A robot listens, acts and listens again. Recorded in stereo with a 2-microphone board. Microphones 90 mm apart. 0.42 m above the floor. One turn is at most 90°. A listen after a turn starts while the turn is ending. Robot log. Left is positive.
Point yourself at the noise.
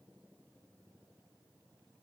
cmd idle
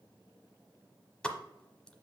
cmd yaw +30
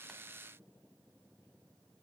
cmd idle
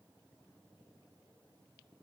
end: I heard a pop, but can't make it out now. It was about 20° right or 140° left.